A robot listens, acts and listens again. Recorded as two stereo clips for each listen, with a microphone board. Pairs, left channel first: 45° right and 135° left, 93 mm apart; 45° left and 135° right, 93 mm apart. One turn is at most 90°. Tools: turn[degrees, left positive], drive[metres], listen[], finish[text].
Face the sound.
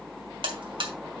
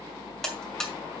Thought: The buzzer: 130° left.
Action: turn[90]
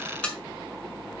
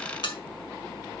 Thought: The buzzer is now 30° left.
Action: turn[30]
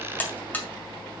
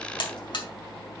Thought: The buzzer is now 25° left.
Action: turn[25]
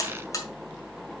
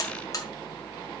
Action: finish[Found it: a buzzer, straight ahead, 2 to 4 m away.]